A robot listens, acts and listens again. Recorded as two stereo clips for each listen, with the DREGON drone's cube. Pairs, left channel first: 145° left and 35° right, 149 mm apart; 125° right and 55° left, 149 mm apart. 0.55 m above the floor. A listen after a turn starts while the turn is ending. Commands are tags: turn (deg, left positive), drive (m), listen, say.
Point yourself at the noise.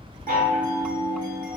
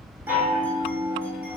<turn deg="-20"/>
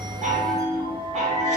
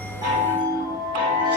<say>Found it: a chime, straight ahead, 1 to 2 m away.</say>